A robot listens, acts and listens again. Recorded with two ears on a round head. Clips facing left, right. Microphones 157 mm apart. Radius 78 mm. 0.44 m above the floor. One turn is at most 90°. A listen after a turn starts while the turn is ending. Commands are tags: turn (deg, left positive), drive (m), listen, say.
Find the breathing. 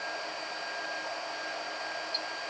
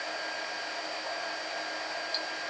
<listen/>
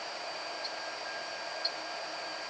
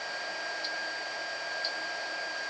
<listen/>
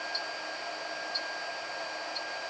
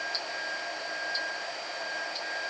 <say>I can't make out breathing, only ticking.</say>